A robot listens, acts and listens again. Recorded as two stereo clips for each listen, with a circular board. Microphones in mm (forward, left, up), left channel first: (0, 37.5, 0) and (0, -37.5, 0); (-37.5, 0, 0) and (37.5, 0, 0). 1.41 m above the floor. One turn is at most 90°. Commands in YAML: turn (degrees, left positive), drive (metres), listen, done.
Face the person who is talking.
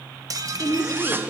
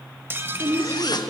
turn: 45
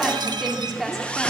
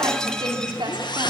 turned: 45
done: "Facing the woman speaking."